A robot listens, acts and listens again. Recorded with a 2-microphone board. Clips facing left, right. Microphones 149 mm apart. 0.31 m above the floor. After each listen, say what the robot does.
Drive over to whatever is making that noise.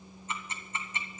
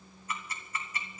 Turn 25° left.
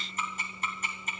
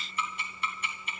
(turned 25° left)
Turn 125° left.
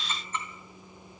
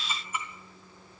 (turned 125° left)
Turn 10° right.
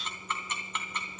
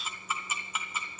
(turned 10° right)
Drive 1.0 m forward.
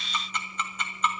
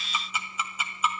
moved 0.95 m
Turn 10° right.
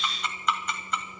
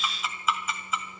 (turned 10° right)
Drive 1.0 m forward.
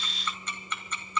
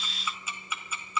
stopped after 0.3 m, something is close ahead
Turn 10° right.
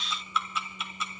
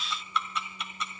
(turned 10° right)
Arrived at the ticking, straight ahead.